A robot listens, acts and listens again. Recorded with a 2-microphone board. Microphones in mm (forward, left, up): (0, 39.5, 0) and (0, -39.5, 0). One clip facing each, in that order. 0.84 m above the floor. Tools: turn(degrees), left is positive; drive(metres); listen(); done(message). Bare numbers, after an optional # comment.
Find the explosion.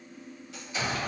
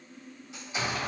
# The explosion: about 25° right or 155° right.
turn(-25)
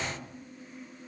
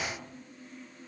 # So it is at 130° right.
turn(-130)
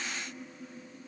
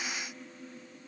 done("I heard an explosion from this way, but can't make it out now.")